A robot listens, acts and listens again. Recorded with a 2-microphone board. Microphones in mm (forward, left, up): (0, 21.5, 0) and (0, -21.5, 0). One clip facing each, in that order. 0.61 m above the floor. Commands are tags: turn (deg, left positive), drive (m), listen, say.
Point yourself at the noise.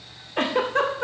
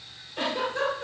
<turn deg="60"/>
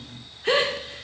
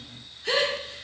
<turn deg="40"/>
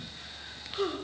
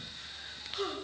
<turn deg="15"/>
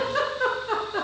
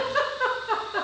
<say>Found it: a giggle, straight ahead.</say>